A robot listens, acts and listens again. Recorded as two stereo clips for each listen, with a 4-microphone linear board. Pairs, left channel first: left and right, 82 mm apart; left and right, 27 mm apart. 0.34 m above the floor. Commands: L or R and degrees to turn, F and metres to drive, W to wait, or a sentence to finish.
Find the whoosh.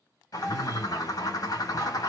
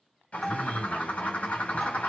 W
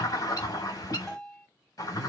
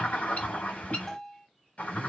W
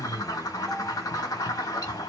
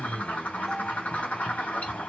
I can't make out a whoosh, only a bird and a bell.